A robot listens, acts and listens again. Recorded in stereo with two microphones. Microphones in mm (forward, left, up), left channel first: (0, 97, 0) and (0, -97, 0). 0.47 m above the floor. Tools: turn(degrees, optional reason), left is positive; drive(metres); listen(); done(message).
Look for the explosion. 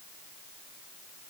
listen()
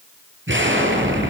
turn(degrees=-90)
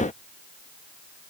done("I heard an explosion from this way, but can't make it out now.")